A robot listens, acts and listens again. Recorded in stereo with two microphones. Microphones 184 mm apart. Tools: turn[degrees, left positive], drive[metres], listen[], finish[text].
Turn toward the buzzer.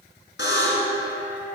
Action: turn[90]
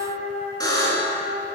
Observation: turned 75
Thought: So it is at 20° left.
Action: turn[20]
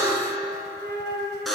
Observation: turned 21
Action: finish[Found it: a buzzer, straight ahead.]